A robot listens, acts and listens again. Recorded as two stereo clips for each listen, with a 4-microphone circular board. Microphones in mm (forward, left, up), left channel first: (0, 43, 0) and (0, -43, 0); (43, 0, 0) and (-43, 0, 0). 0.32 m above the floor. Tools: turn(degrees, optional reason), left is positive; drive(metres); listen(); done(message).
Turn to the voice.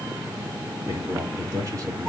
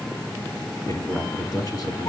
turn(degrees=-40, reason="The man speaking: 40° right.")
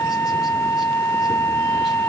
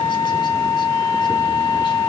listen()
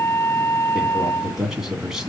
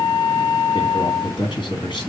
done("Facing the man speaking, 2 to 4 m away.")